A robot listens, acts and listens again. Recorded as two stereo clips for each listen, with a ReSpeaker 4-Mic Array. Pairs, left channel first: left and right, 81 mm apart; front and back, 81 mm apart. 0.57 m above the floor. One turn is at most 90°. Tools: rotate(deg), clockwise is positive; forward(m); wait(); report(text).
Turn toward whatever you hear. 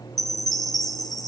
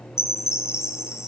rotate(-55)
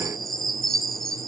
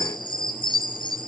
report("Found it: a chime, straight ahead.")